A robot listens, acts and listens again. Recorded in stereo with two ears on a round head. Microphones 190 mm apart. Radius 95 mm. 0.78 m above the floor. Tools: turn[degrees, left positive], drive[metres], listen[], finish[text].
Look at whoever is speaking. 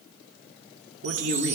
Thought: The man speaking: about 65° right or 115° right.
Action: turn[-65]
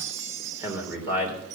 Thought: So it is at 10° right.
Action: turn[-10]
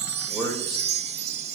Action: finish[Found it: a man speaking, straight ahead, 2 to 4 m away.]